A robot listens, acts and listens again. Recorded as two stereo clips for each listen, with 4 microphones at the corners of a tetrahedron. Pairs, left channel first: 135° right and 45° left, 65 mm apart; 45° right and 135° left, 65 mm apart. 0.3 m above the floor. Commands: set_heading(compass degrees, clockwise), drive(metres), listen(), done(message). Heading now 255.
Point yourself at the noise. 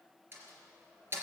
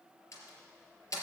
set_heading(265)
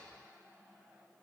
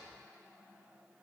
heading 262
done("Facing where the door slam came from. I can't hear it now.")